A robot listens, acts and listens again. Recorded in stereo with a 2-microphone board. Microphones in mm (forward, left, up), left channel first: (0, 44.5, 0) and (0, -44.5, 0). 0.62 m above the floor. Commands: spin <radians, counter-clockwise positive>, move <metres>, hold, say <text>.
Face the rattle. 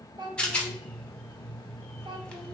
spin 0.52
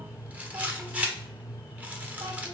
spin -0.35
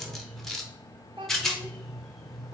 say Facing the rattle, under 1 m away.